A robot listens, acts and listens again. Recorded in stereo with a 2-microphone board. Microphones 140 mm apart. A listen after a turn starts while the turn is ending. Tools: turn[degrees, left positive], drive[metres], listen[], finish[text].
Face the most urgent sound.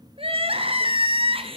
Thought: The crying: about 40° right or 140° right.
Action: turn[-40]
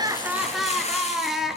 Action: finish[Found it: crying, straight ahead, 1 to 2 m away.]